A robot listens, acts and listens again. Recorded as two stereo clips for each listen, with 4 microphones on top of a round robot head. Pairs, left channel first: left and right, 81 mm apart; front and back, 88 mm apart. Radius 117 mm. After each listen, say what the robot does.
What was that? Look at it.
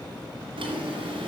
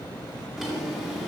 Turn 95° right.
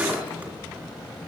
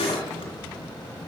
Turn 20° right.
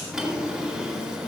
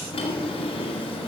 Turn 10° right.
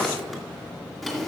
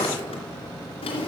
Facing the drawer.